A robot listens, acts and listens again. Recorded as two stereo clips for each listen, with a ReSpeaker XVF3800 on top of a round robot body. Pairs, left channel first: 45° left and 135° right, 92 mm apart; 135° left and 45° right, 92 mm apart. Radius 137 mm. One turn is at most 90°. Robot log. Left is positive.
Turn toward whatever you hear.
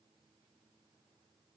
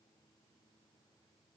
cmd idle
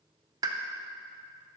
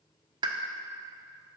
note: The pop: 85° right.
cmd yaw -85
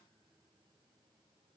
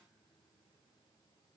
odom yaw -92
end: Facing where the pop came from. I can't hear it now.